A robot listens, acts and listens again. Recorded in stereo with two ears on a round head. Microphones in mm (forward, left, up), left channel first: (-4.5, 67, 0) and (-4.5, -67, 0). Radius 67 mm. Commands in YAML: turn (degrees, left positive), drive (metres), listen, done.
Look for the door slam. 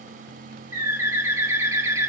listen: true
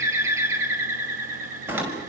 turn: -30
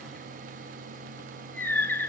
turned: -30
listen: true
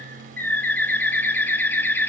done: "I heard a door slam, but can't make it out now. It was about 15° left or 135° right."